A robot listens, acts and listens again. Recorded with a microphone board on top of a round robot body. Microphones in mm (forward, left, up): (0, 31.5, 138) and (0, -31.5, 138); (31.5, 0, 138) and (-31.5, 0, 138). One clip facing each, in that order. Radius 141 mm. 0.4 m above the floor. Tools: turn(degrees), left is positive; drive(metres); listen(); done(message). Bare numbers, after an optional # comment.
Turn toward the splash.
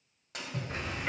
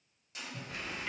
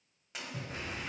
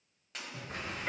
# The splash: 85° left.
turn(85)
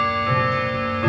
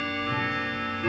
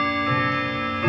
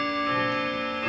done("I heard a splash from this way, but can't make it out now.")